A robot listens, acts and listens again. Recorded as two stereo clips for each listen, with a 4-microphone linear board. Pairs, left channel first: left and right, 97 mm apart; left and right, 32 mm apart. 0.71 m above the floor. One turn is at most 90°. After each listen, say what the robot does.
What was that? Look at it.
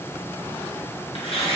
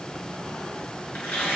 Turn 90° left.
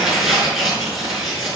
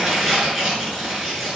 Facing the tearing paper.